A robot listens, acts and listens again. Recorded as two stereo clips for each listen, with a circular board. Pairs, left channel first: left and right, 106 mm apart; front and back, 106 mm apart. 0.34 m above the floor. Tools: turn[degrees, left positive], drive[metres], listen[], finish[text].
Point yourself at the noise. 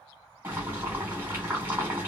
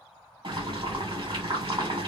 Thought: The boiling: 155° right.
Action: turn[-155]
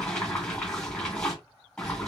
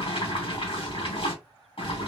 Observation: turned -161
Action: finish[Facing the boiling.]